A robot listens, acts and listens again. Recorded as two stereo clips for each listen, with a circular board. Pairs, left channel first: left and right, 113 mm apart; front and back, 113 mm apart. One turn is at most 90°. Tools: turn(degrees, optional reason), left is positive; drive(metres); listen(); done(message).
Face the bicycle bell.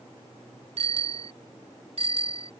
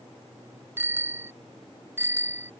turn(degrees=-90, reason="The bicycle bell: 110° right.")
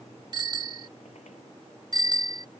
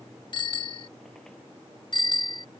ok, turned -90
turn(degrees=-40, reason="The bicycle bell is now 40° right.")
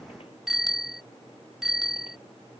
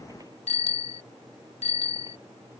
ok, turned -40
done("Facing the bicycle bell.")